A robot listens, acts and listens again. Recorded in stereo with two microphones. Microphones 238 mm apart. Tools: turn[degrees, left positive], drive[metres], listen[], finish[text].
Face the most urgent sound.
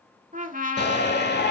Thought: The shout: about 45° left or 135° left.
Action: turn[45]
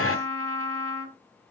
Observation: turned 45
Thought: So it is at 85° left.
Action: turn[85]
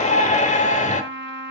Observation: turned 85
Thought: The shout is now 35° left.
Action: turn[35]
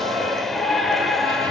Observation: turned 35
Action: finish[Facing the shout.]